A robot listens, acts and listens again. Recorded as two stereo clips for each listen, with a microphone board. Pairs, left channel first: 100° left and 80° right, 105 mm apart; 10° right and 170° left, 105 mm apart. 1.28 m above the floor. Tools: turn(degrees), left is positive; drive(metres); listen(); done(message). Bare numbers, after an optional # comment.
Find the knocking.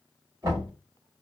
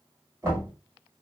# The knocking: 130° right.
turn(-130)
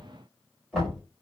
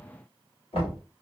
done("Facing the knocking.")